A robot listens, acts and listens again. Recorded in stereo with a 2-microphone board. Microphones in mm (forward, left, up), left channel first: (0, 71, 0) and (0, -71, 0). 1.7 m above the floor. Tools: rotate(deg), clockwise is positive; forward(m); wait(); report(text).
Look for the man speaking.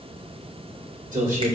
rotate(70)
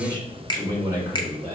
rotate(25)
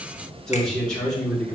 rotate(-10)
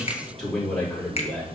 report("Found it: a man speaking, straight ahead.")